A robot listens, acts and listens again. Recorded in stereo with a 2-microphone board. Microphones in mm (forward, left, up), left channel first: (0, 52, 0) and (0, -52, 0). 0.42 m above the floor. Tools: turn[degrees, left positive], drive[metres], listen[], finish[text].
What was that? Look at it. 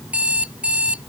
Action: turn[-30]
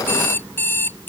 Thought: So it is at 20° left.
Action: turn[20]
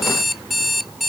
Action: finish[Found it: an alarm clock, straight ahead.]